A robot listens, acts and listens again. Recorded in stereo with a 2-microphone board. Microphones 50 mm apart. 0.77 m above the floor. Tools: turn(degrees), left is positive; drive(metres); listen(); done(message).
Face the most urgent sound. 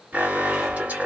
turn(degrees=-30)
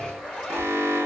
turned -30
turn(degrees=-110)
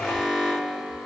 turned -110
turn(degrees=-10)
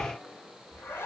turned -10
listen()
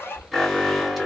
done("Found it: an alarm, straight ahead.")